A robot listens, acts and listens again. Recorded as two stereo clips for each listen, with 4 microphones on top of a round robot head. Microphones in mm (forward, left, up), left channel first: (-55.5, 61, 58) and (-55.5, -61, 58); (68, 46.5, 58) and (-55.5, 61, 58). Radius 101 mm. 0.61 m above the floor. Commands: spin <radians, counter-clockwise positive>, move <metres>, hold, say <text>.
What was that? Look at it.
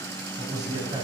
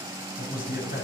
spin -0.44
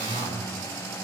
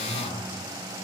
hold
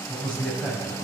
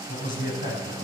say Found it: a man speaking, straight ahead, over 4 m away.